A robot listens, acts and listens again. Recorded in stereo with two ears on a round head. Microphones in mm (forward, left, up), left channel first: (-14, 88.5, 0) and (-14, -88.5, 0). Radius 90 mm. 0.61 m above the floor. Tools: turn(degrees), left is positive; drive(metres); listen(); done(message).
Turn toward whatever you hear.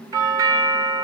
turn(degrees=-20)
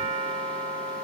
turn(degrees=-140)
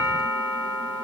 turn(degrees=20)
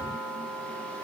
done("Facing the doorbell, 2 to 4 m away.")